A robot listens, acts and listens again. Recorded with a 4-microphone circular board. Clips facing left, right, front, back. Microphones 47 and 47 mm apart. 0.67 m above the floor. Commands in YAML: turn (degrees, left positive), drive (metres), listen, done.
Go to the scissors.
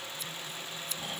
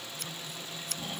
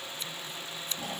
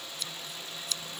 turn: -60
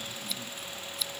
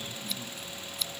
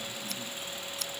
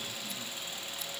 drive: 1.0
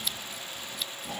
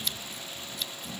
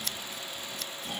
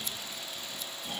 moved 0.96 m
drive: 1.0
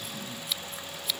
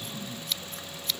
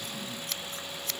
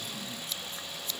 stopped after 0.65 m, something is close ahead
turn: 10
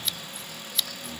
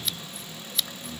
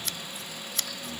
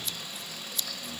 done: "Arrived at the scissors, straight ahead."